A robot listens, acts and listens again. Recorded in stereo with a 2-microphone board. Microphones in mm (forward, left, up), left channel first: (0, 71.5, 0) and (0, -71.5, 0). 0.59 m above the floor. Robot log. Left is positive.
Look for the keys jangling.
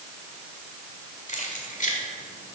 note: The keys jangling: about 60° left or 120° left.
cmd yaw +60
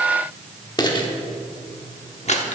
note: So it is at 50° left.
cmd yaw +50
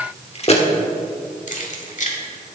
note: The keys jangling is now 60° left.
cmd yaw +60
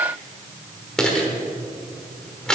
end: Found it: keys jangling, straight ahead, 1 to 2 m away.